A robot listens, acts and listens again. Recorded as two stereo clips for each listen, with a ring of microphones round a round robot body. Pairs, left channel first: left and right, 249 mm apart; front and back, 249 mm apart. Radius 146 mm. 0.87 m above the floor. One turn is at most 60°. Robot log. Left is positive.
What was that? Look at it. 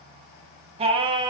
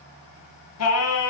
note: The singing: 20° right.
cmd yaw -20
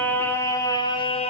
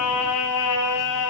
note: The singing is now 25° left.
cmd yaw +25
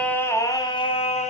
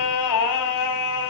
note: The singing is now 30° left.
cmd yaw +30
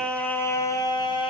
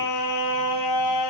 note: The singing is now 20° left.
cmd yaw +20
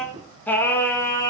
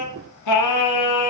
note: The singing is now 10° left.
cmd yaw +10
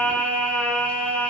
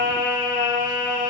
end: Found it: singing, straight ahead.